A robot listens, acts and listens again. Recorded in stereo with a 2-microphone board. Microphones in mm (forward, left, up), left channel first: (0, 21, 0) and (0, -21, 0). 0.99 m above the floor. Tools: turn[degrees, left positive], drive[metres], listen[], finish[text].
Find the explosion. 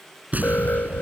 Thought: The explosion: about 35° right or 145° right.
Action: turn[-35]
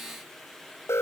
Action: listen[]
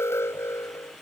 Action: finish[I heard an explosion, but can't make it out now. It was about straight ahead or 110° right.]